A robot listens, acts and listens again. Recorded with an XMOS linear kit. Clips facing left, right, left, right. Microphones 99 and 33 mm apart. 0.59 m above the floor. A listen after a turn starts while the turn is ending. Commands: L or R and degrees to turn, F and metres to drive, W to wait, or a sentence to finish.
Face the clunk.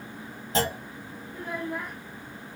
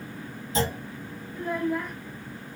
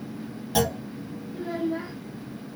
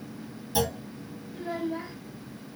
L65
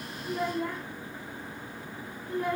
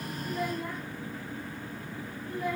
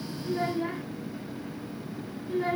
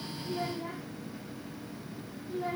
W
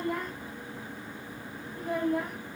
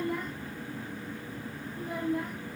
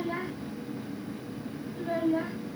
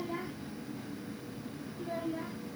I heard a clunk, but can't make it out now. It was about straight ahead or 50° left.